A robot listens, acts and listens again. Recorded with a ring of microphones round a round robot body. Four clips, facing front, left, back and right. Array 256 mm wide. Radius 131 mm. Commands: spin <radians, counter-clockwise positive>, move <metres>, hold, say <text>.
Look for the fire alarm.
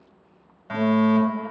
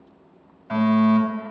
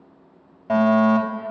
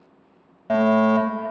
spin -2.27
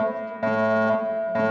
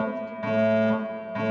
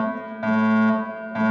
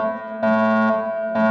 spin -1.05
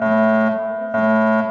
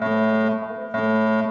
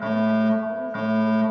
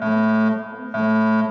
spin 0.26
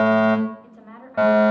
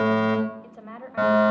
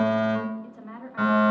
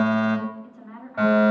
say Facing the fire alarm.